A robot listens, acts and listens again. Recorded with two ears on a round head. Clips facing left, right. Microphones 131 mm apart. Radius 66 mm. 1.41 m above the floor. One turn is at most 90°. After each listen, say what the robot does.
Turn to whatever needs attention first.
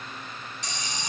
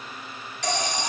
Turn 60° right.
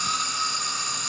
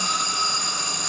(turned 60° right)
Turn 60° right.
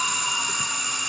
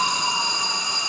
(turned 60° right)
Turn 30° right.
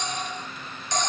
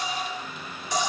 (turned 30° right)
Facing the alarm.